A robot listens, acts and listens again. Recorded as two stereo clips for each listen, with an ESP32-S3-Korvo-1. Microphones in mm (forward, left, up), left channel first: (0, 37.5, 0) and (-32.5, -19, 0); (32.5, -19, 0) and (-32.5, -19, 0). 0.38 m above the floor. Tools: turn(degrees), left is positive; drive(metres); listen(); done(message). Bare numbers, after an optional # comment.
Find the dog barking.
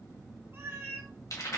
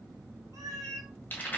listen()
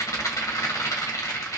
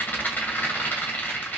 listen()
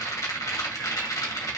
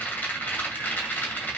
done("I can't make out a dog barking, only a cat meowing and a rattle.")